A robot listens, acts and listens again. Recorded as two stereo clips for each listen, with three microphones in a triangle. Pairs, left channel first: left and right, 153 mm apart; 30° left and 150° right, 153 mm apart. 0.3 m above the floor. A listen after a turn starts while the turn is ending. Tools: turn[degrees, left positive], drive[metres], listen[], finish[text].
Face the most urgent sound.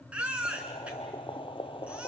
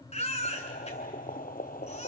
Thought: The baby crying: 10° right.
Action: turn[-10]
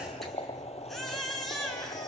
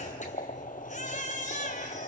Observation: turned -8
Action: finish[Facing the baby crying.]